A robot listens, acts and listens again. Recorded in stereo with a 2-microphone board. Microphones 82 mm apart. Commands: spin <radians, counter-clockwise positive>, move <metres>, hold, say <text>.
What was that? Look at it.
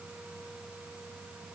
hold
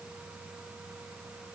hold
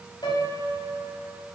spin 1.13
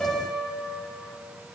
spin 0.17
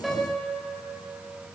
say Facing the piano, 2 to 4 m away.